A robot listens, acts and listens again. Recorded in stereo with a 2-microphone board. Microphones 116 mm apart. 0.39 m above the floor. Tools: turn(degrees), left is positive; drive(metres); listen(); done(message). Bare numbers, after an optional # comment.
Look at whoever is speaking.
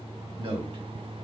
# The man speaking: about 50° right or 130° right.
turn(-50)
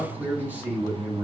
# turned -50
# So it is at 15° right.
turn(-15)
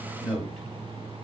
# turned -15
done("Facing the man speaking.")